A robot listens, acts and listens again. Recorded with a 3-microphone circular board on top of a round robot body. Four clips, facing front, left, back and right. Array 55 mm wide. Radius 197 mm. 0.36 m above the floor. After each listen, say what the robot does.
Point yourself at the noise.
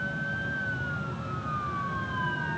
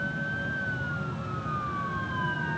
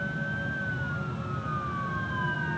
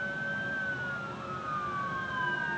Keep listening.
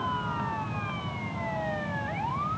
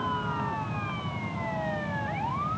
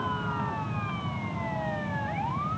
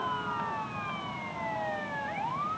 Keep listening.
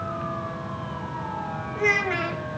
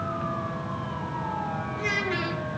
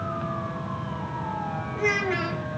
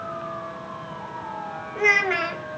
Turn 70° right.
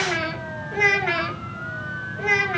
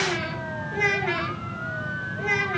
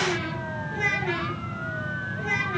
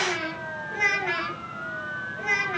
Facing the child speaking.